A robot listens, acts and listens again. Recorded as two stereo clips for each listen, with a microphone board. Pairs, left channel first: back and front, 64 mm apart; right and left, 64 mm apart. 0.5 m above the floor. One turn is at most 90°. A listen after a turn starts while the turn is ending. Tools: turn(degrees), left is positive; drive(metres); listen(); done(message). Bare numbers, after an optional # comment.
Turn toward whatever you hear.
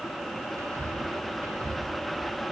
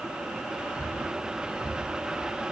# The whispering: 15° left.
turn(15)
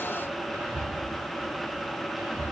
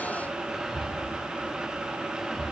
done("Found it: whispering, straight ahead, 1 to 2 m away.")